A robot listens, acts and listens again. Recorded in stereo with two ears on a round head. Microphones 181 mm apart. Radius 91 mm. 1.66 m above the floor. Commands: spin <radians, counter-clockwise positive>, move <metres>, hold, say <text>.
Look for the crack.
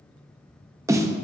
hold
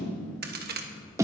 spin -0.87
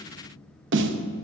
hold
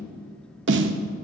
say I heard a crack, but can't make it out now. It was about straight ahead or 80° right.